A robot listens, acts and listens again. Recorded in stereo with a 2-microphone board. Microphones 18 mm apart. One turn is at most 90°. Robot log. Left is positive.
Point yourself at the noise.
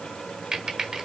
note: The typing on a keyboard: about 35° right or 145° right.
cmd yaw -35
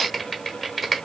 end: Found it: typing on a keyboard, straight ahead.